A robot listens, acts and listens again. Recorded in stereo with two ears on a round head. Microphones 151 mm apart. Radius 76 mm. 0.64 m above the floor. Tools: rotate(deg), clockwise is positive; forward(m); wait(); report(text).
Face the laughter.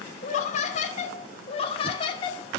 rotate(-30)
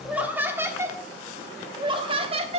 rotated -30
rotate(35)
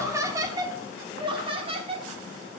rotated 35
rotate(35)
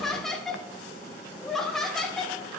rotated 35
report("Facing the laughter, 1 to 2 m away.")